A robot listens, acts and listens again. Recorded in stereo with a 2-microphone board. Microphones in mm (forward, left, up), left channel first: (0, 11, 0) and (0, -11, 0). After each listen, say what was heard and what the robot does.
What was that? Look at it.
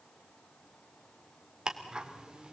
The ticking: about 40° right or 140° right. Turn 40° right.
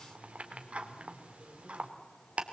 So it is at 105° right. Turn 105° right.
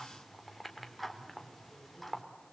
Facing the ticking.